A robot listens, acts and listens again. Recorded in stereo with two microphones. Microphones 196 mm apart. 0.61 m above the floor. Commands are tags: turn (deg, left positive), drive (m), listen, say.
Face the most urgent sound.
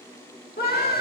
<turn deg="50"/>
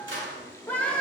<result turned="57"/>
<turn deg="10"/>
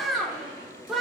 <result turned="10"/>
<say>Found it: a scream, straight ahead.</say>